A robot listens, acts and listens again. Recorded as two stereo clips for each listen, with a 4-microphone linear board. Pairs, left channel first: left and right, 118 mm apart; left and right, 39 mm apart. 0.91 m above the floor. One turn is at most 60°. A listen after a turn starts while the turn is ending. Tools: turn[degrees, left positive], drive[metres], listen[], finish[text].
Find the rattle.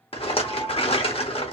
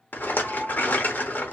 Thought: The rattle: about 55° left or 125° left.
Action: turn[55]
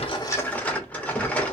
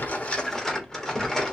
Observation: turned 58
Thought: So it is at 15° left.
Action: turn[15]
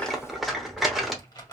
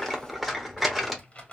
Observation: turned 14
Action: finish[Facing the rattle.]